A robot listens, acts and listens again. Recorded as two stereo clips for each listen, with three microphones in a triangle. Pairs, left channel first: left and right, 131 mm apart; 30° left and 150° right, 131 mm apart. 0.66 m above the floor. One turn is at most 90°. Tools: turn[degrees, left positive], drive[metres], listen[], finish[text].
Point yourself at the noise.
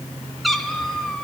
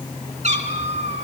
Thought: The cat meowing: 175° left.
Action: turn[90]
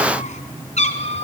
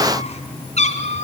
Thought: The cat meowing is now 55° left.
Action: turn[55]
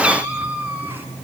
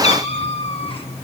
Thought: The cat meowing is now 15° right.
Action: turn[-15]
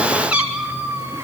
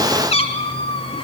Thought: The cat meowing is now 15° right.
Action: turn[-15]
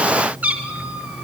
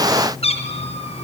Thought: The cat meowing is now 10° right.
Action: turn[-10]
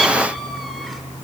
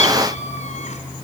Action: finish[Found it: a cat meowing, straight ahead.]